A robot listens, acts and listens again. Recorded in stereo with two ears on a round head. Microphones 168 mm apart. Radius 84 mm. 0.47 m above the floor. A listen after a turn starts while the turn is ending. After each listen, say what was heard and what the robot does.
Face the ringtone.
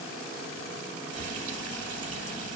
Keep listening.
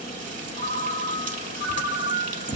The ringtone: about 50° left or 130° left. Turn 50° left.
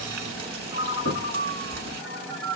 Found it: a ringtone, straight ahead, 1 to 2 m away.